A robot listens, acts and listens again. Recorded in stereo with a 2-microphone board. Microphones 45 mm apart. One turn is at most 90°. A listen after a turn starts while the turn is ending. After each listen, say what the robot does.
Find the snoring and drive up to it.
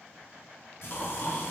Turn 45° left.
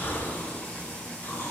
Turn 90° left.
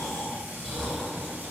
Turn 10° left.
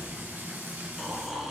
Drive 1.0 m forward.
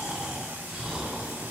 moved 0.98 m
Turn 15° right.
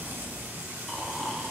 Drive 1.0 m forward.
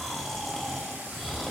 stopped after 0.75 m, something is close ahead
Arrived at the snoring, straight ahead.